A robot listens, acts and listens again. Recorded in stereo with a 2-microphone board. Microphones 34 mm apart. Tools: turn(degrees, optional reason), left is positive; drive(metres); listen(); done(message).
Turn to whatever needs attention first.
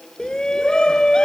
turn(degrees=20, reason="The shout: about 20° left or 160° left.")
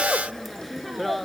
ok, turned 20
done("Facing the shout.")